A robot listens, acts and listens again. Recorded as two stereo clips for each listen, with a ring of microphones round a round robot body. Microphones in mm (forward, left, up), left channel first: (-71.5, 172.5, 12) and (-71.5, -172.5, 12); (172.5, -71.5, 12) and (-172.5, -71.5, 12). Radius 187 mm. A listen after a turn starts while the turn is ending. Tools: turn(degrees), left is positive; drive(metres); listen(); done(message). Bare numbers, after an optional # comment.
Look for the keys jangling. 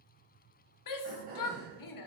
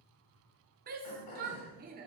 listen()
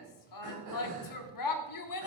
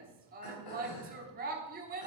listen()
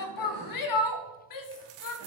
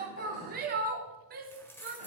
# The keys jangling: 85° right.
turn(-85)
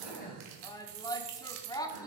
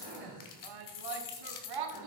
# The keys jangling is now 35° right.
turn(-35)
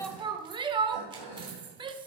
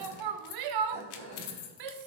# The keys jangling is now 10° right.
turn(-10)
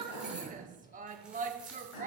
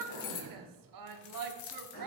done("Found it: keys jangling, straight ahead, 1 to 2 m away.")